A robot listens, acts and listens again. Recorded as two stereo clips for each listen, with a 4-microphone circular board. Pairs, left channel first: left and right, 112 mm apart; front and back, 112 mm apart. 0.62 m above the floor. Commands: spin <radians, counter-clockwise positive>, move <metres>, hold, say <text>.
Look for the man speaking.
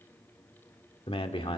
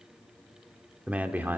spin 1.92
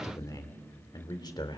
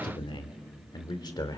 spin 0.79
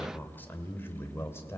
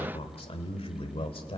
spin 0.44
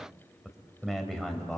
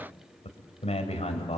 say Found it: a man speaking, straight ahead, 2 to 4 m away.